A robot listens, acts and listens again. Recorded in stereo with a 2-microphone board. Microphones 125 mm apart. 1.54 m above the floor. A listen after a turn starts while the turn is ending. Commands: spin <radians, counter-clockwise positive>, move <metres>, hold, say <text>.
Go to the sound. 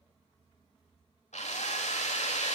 spin 1.57
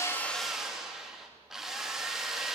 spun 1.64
move 1.0
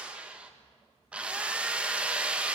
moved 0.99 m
spin -0.17
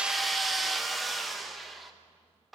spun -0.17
move 1.0
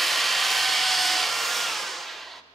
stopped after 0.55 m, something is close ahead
say Arrived at the drill, straight ahead.